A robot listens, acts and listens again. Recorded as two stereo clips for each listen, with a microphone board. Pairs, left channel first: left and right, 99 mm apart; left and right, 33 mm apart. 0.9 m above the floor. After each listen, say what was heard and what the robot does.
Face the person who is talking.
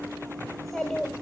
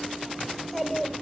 Turn 30° left.
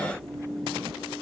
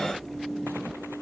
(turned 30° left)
Keep listening.
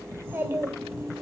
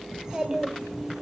So it is at 25° right. Turn 25° right.
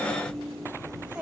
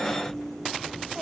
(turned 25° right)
Keep listening.
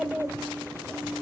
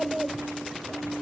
The child speaking is now 10° right. Turn 10° right.
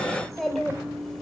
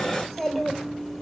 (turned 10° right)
Facing the child speaking, 2 to 4 m away.